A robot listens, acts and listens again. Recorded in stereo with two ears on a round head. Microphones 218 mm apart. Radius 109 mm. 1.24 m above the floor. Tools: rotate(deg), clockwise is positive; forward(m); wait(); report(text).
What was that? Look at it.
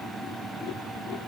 wait()
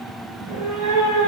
rotate(65)
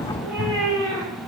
rotate(10)
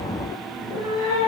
rotate(10)
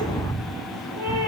report("Found it: a cat meowing, straight ahead.")